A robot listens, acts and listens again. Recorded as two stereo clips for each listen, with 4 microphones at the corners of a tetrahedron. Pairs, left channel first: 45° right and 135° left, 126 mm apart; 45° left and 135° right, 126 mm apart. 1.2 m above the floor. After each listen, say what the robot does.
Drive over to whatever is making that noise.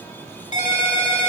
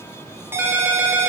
Turn 65° right.
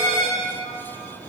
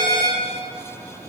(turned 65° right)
Drive 1.0 m forward.
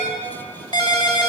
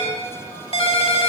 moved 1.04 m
Drive 1.0 m forward.
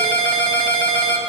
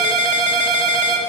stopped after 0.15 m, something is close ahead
I am next to the ringtone.